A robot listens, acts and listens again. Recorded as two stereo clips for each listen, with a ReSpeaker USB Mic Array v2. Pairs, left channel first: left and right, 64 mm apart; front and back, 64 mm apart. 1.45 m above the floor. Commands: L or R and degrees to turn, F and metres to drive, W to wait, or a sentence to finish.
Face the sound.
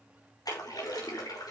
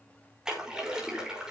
L100
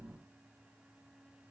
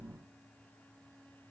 I heard a splash from this way, but can't make it out now.